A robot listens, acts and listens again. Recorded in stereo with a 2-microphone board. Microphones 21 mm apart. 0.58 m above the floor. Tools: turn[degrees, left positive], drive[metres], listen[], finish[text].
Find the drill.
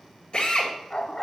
Thought: The drill: about 55° left or 125° left.
Action: turn[55]
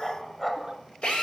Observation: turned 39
Thought: So it is at 80° left.
Action: turn[80]
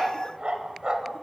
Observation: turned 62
Thought: Nothing new. It was at 20° left.
Action: turn[20]
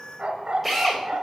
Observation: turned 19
Action: finish[Facing the drill.]